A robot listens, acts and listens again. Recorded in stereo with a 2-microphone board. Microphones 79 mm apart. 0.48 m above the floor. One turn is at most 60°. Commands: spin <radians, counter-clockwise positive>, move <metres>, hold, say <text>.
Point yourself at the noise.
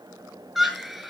spin 0.52
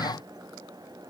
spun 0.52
hold
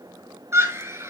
spin -0.52
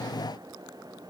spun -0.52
hold
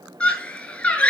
spin 0.35
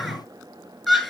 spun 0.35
say Found it: a scream, straight ahead, over 4 m away.